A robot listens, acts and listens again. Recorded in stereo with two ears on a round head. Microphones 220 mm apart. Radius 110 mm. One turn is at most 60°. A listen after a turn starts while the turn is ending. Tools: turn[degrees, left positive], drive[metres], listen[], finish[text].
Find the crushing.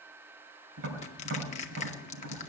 Thought: The crushing: about 30° left or 150° left.
Action: turn[30]
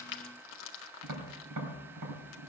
Thought: So it is at 120° left.
Action: turn[60]
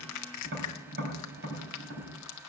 Thought: The crushing is now 80° left.
Action: turn[60]
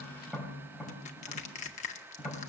Thought: The crushing is now 30° left.
Action: turn[30]
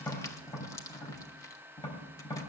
Thought: The crushing is now 15° left.
Action: turn[15]
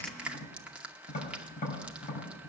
Action: finish[Facing the crushing, 1 to 2 m away.]